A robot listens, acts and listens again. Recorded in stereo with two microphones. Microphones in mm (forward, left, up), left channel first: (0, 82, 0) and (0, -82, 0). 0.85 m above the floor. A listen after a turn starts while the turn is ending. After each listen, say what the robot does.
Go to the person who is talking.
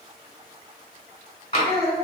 Turn 90° left.
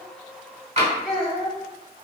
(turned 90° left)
Drive 1.0 m forward.
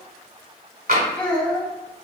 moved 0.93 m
Drive 1.0 m forward.
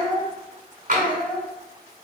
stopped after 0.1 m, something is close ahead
Turn 10° left.
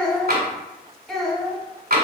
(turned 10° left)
I am next to the child speaking.